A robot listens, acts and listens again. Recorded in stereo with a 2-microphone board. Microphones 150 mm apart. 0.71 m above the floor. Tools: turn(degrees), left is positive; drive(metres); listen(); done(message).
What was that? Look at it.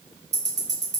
turn(degrees=-50)
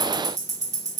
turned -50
turn(degrees=-65)
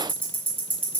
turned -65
turn(degrees=-15)
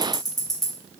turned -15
done("Facing the ticking, under 1 m away.")